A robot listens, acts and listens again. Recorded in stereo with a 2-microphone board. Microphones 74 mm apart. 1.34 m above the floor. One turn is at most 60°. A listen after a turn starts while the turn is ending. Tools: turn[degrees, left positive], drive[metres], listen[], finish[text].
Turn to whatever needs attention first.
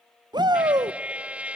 Thought: The shout: about 75° right or 105° right.
Action: turn[-60]
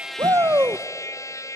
Thought: So it is at 35° right.
Action: turn[-35]
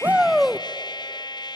Action: finish[Found it: a shout, straight ahead, under 1 m away.]